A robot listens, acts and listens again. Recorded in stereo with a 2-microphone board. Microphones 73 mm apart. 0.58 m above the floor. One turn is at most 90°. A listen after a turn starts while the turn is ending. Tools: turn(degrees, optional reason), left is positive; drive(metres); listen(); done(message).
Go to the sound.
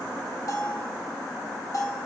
turn(degrees=50, reason="The bell: about 50° left or 130° left.")
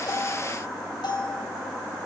turn(degrees=80, reason="So it is at 80° left.")
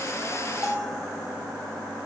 turn(degrees=-10, reason="The bell is now 10° right.")
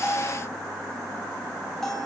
drive(metres=1.0)
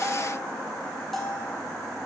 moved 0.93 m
drive(metres=1.0)
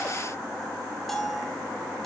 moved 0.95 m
drive(metres=1.0)
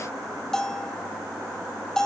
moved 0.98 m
turn(degrees=10, reason="The bell is now 10° left.")
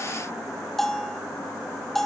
drive(metres=1.0)
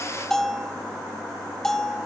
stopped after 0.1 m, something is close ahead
done("I am next to the bell.")